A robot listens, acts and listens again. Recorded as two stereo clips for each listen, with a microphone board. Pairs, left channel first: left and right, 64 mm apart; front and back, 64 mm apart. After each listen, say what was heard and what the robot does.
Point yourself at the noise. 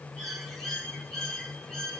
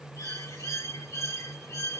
The bird: 10° left. Turn 10° left.
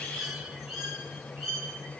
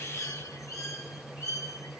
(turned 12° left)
Facing the bird, 2 to 4 m away.